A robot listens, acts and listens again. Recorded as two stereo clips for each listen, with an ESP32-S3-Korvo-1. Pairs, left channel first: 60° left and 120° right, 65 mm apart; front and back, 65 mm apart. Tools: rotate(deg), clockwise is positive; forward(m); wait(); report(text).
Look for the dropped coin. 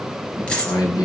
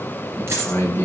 rotate(-135)
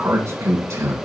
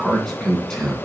report("I heard a dropped coin from this way, but can't make it out now.")